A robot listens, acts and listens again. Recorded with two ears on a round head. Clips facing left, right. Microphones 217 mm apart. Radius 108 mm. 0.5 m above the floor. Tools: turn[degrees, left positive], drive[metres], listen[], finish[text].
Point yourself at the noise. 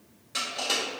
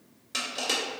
Thought: The crushing: about 50° right or 130° right.
Action: turn[-50]
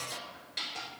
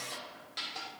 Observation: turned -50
Action: finish[Facing the crushing, 1 to 2 m away.]